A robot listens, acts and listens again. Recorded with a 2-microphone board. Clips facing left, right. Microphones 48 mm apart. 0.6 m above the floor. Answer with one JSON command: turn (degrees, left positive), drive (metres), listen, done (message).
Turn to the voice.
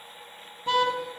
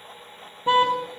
{"listen": true}
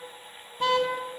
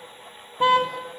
{"listen": true}
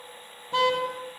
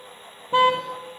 {"done": "I can't make out anyone speaking, only a car horn."}